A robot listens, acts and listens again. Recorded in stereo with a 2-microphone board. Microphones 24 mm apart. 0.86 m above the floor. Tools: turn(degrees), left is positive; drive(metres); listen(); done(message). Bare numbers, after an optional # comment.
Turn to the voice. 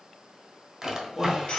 turn(30)
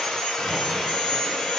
listen()
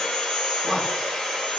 # So it is at 25° right.
turn(-25)
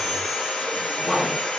# The man speaking is now 10° left.
turn(10)
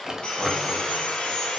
listen()
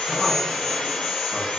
listen()
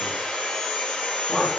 done("Found it: a man speaking, straight ahead.")